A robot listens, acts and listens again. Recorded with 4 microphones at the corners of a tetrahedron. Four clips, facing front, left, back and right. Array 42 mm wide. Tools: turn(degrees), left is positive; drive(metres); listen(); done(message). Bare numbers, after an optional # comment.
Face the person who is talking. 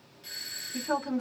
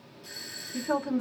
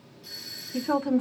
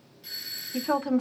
# The woman speaking: 105° right.
turn(-105)
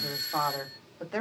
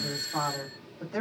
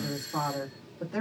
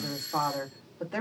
# The woman speaking is now 35° right.
turn(-35)
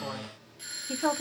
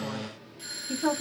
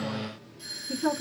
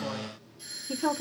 done("Found it: a woman speaking, straight ahead, 2 to 4 m away.")